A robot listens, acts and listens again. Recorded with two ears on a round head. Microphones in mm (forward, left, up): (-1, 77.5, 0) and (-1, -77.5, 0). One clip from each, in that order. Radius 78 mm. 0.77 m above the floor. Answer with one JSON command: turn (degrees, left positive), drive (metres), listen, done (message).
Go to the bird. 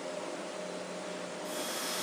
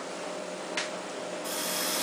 {"listen": true}
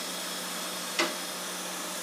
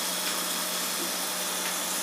{"listen": true}
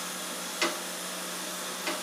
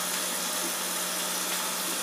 {"done": "I can't make out a bird, only a running tap."}